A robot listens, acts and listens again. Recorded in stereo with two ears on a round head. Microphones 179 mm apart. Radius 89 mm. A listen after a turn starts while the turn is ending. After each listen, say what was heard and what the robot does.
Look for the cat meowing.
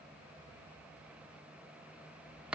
Keep listening.
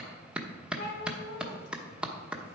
The cat meowing: about 60° left or 120° left. Turn 60° left.
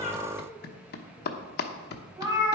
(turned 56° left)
So it is at 20° right. Turn 20° right.
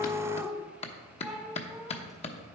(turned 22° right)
Facing the cat meowing.